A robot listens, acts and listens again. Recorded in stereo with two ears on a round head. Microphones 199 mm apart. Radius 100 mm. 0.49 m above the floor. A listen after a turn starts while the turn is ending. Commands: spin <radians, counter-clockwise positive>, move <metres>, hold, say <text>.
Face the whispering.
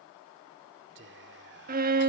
spin -0.96
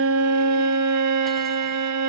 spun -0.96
hold
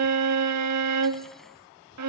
spin -0.87
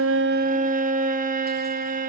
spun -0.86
hold
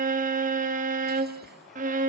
hold
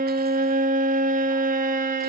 say I heard whispering from this way, but can't make it out now.